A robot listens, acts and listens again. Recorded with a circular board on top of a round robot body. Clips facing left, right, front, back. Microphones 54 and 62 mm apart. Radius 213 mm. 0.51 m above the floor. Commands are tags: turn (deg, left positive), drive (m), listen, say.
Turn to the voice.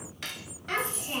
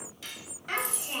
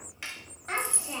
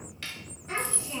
<say>Found it: a child speaking, straight ahead.</say>